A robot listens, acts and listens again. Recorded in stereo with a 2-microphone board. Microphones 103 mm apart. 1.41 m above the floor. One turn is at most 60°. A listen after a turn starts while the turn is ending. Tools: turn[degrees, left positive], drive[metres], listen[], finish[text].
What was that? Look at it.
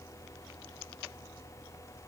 Action: listen[]
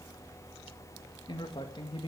Thought: The man speaking: about 55° left or 125° left.
Action: turn[55]
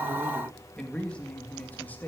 Thought: So it is at 15° left.
Action: turn[15]
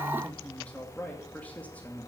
Thought: The man speaking is now 15° left.
Action: turn[15]
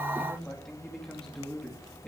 Action: finish[Facing the man speaking.]